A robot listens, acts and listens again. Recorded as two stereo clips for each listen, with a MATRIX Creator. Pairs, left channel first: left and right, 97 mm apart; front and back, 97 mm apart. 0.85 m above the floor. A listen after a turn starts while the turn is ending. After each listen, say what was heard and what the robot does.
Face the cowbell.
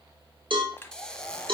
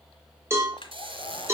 The cowbell: 120° right. Turn 120° right.
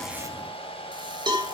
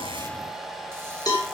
The cowbell is now 50° right. Turn 50° right.
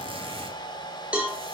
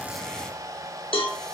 The cowbell is now 15° right. Turn 15° right.
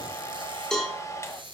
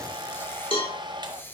Found it: a cowbell, straight ahead.